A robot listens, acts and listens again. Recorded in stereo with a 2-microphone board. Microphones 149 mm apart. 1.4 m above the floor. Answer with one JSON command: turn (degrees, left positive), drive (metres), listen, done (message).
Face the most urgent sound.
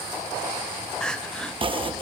{"turn": 30}
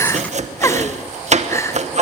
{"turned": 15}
{"turn": 160}
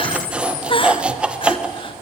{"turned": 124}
{"turn": 35}
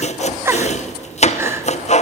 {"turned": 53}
{"turn": -20}
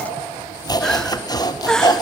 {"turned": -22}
{"done": "Found it: crying, straight ahead."}